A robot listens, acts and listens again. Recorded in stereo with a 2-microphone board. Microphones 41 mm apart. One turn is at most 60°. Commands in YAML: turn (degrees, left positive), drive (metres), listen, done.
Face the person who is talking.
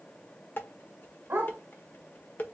listen: true
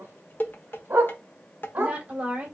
turn: -35
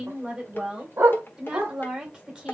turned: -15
turn: -20
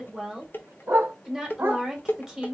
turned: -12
turn: -15
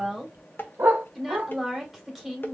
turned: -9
done: "Found it: a woman speaking, straight ahead, 2 to 4 m away."